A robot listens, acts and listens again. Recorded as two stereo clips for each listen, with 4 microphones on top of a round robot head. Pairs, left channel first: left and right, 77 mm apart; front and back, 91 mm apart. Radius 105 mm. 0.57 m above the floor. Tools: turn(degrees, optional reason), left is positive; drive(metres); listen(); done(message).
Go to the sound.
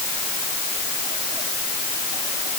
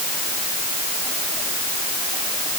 listen()
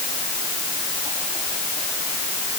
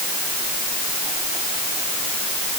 listen()
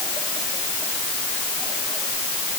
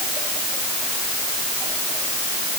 done("I can't make out anything to turn to.")